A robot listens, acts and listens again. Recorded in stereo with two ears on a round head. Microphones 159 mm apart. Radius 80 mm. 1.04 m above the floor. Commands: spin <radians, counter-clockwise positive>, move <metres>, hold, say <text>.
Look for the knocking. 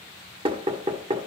spin -0.52
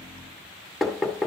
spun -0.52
say Found it: knocking, straight ahead, 1 to 2 m away.